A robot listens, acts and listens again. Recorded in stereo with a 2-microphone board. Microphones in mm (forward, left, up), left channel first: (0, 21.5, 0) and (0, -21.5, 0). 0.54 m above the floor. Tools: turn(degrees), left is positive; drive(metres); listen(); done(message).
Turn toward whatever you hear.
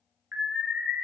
turn(degrees=-35)
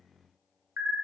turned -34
turn(degrees=-110)
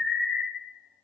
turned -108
done("Found it: an alarm, straight ahead, 1 to 2 m away.")